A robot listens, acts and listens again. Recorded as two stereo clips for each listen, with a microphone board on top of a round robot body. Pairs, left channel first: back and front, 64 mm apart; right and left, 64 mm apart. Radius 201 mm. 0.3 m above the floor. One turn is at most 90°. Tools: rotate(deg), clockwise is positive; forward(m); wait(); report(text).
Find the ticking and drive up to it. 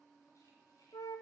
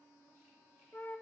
wait()
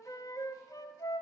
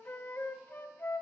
wait()
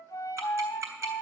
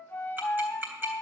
rotate(-35)
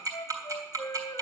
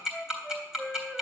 rotate(-15)
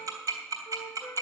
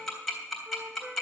forward(1.0)
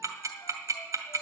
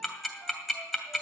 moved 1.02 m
forward(1.0)
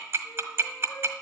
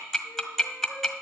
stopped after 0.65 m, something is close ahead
report("I am next to the ticking.")